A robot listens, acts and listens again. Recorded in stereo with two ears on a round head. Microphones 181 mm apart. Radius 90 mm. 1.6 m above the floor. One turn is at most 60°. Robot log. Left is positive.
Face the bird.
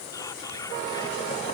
cmd idle
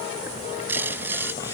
cmd yaw -30
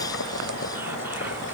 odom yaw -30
cmd idle
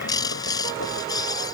note: So it is at 20° left.
cmd yaw +20
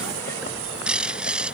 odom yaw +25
end: Found it: a bird, straight ahead.